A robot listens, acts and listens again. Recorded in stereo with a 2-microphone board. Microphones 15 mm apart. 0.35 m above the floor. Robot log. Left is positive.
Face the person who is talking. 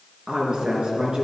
cmd yaw -90
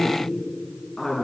end: Facing the woman speaking, over 4 m away.